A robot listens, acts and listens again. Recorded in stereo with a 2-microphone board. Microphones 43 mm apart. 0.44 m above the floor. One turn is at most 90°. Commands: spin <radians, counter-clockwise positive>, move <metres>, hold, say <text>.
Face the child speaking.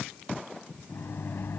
hold
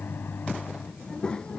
spin 0.44
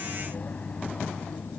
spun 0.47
spin 1.57
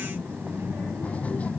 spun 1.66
spin 0.52
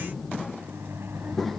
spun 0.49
say Facing the child speaking.